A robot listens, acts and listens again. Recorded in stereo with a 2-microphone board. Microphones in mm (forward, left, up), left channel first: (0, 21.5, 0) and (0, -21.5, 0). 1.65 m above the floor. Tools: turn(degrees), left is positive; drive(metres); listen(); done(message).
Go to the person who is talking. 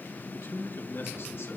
turn(degrees=60)
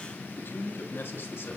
turn(degrees=55)
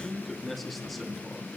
drive(metres=1.0)
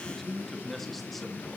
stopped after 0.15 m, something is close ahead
done("Something is in my way. I am facing the man speaking but have not reached it.")